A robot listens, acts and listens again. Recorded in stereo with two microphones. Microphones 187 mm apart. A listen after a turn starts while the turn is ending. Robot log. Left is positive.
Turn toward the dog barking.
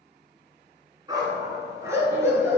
cmd yaw -30
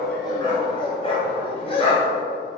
note: So it is at 35° left.
cmd yaw +35
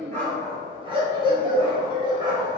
note: The dog barking is now 25° right.
cmd yaw -25
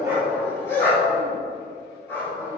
note: The dog barking is now 15° left.
cmd yaw +15
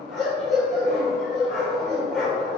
end: Found it: a dog barking, straight ahead.